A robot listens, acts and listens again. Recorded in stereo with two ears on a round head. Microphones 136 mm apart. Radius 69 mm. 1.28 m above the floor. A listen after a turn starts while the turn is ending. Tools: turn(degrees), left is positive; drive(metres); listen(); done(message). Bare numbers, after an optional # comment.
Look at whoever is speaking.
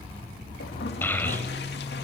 turn(30)
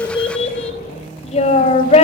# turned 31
# So it is at 135° left.
turn(135)
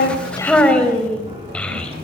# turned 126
# The child speaking is now 10° left.
turn(10)
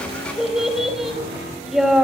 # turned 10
done("Facing the child speaking.")